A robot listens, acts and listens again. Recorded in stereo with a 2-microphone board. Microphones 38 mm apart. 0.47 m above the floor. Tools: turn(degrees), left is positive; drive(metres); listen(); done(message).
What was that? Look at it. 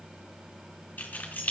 turn(degrees=50)
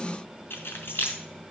turn(degrees=80)
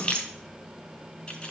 turn(degrees=25)
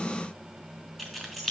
done("Found it: keys jangling, straight ahead.")